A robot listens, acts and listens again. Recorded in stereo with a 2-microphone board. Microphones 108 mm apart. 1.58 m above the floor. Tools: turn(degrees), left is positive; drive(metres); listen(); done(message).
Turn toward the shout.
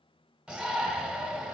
turn(degrees=-30)
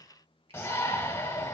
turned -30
turn(degrees=25)
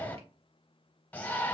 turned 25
turn(degrees=15)
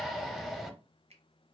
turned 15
done("Found it: a shout, straight ahead, under 1 m away.")